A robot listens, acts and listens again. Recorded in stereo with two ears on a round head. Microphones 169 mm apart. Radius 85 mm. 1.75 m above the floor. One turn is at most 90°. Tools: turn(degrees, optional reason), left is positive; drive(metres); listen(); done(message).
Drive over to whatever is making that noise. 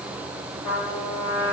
turn(degrees=50, reason="The trumpet: about 50° left or 130° left.")
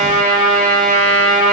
turn(degrees=10, reason="So it is at 10° left.")
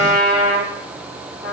drive(metres=1.0)
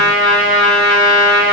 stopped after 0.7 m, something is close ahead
done("Arrived at the trumpet, straight ahead.")